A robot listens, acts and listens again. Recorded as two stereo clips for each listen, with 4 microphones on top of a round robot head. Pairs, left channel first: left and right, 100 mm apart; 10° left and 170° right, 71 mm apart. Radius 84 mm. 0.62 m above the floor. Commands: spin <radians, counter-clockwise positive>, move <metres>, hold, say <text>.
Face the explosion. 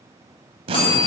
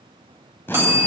spin -1.13
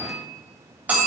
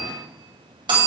say I heard an explosion from this way, but can't make it out now.